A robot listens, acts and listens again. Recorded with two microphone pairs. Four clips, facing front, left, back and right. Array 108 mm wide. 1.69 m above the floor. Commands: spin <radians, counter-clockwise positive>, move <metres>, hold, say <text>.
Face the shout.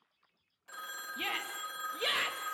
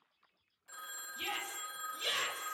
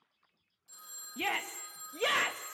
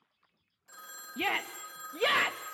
spin -1.92
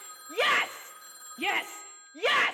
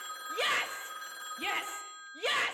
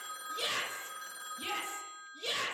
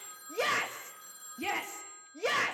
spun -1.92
say Found it: a shout, straight ahead.